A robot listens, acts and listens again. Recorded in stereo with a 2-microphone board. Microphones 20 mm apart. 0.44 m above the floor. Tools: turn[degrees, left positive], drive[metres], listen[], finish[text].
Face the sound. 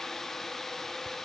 Action: listen[]
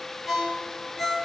Thought: The ringtone: about 25° right or 155° right.
Action: turn[-25]
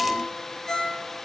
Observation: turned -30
Action: finish[Facing the ringtone, 2 to 4 m away.]